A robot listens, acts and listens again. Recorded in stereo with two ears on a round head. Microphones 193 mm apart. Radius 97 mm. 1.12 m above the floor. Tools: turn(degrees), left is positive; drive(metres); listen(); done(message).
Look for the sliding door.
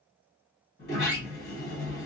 turn(degrees=45)
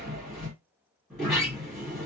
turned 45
done("Found it: a sliding door, straight ahead, 1 to 2 m away.")